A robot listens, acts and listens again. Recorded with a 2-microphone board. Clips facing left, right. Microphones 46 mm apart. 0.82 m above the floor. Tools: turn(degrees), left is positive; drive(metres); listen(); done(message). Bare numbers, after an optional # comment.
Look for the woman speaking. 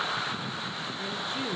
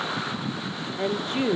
# The woman speaking: about 65° right or 115° right.
turn(-65)
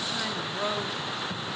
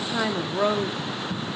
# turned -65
# So it is at 20° right.
turn(-20)
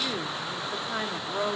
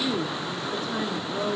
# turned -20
# The woman speaking is now 35° left.
turn(35)
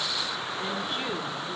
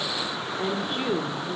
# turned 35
done("Found it: a woman speaking, straight ahead, 1 to 2 m away.")